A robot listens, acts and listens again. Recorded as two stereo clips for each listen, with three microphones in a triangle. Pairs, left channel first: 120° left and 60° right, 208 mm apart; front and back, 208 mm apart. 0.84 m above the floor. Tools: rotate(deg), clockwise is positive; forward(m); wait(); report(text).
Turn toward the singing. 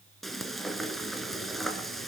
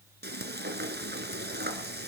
wait()
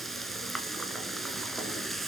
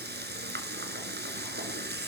wait()
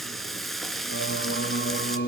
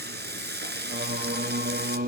rotate(-145)
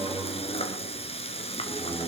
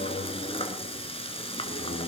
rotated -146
rotate(-15)
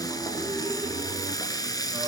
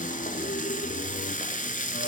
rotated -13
report("Facing the singing, 1 to 2 m away.")